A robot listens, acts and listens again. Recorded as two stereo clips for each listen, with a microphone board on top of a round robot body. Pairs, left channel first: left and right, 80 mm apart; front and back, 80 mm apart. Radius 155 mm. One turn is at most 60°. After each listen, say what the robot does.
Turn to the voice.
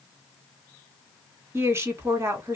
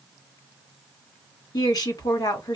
Turn 35° right.
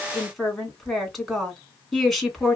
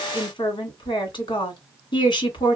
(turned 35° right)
Found it: a woman speaking, straight ahead, 1 to 2 m away.